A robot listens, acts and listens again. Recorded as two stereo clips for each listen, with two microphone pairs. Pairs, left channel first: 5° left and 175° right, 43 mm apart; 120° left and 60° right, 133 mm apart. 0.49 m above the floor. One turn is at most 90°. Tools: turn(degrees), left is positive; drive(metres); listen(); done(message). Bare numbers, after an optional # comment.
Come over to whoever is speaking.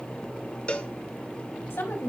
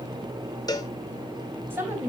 # The woman speaking: 10° left.
turn(10)
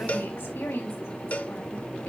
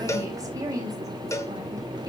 drive(1.0)
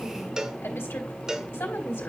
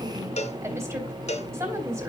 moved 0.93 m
drive(1.0)
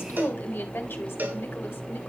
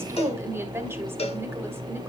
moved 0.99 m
drive(1.0)
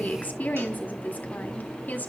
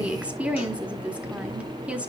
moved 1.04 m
# The woman speaking is now 15° left.
turn(15)
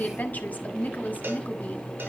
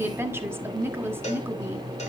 drive(1.0)
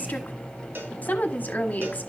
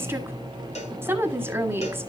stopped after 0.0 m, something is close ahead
done("Arrived at the woman speaking, straight ahead.")